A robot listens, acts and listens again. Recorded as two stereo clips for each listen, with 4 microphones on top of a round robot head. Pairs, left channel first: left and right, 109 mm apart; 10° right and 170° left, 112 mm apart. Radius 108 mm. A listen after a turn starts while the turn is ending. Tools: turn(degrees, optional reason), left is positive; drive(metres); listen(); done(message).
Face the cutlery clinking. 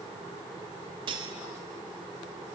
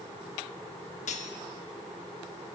turn(degrees=-40, reason="The cutlery clinking: 40° right.")
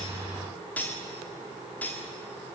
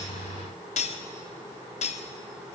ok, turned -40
turn(degrees=10, reason="The cutlery clinking is now 10° left.")
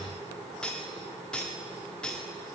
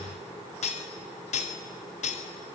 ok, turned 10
done("Found it: cutlery clinking, straight ahead, 1 to 2 m away.")